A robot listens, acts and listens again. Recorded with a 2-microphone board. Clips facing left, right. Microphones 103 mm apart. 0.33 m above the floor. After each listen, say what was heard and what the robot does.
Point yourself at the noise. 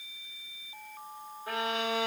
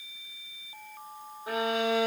The violin: about 20° right or 160° right. Turn 20° right.
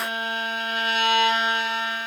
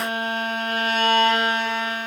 So it is at 140° right. Turn 140° right.
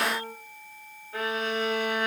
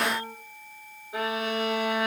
The violin is now 15° right. Turn 15° right.
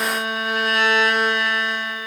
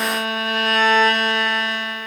Facing the violin, 2 to 4 m away.